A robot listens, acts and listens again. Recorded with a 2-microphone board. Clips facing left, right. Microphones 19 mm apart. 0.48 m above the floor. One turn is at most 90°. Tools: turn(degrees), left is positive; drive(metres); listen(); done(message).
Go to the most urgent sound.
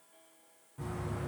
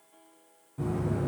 listen()
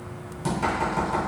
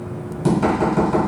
listen()
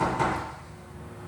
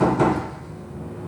done("I can't make out anything urgent to turn to.")